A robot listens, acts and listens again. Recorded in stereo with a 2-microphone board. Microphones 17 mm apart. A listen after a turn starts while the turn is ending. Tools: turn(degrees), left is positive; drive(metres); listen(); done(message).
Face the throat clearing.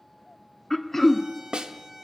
turn(degrees=20)
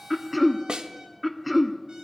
done("Found it: throat clearing, straight ahead, 1 to 2 m away.")